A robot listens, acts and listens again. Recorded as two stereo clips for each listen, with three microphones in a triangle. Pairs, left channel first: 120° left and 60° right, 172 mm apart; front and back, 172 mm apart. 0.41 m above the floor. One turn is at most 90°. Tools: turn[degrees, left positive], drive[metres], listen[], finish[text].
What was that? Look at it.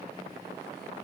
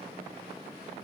Action: listen[]
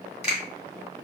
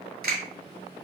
Thought: The finger snap: 165° left.
Action: turn[90]
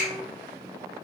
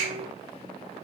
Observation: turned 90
Thought: Nothing new. It was at 75° left.
Action: turn[75]
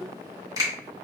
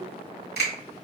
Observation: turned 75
Action: finish[Found it: a finger snap, straight ahead.]